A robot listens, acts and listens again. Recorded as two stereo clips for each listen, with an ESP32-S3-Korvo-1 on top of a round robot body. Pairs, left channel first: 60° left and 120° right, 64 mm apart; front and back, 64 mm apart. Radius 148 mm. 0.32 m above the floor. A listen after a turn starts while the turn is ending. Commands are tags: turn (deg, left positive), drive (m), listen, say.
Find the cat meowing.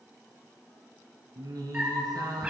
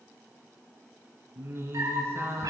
<turn deg="165"/>
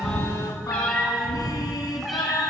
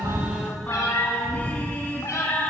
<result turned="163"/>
<turn deg="-35"/>
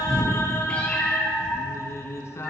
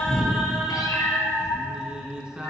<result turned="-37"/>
<turn deg="-25"/>
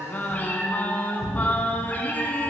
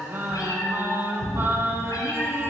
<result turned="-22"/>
<say>Found it: a cat meowing, straight ahead, 2 to 4 m away.</say>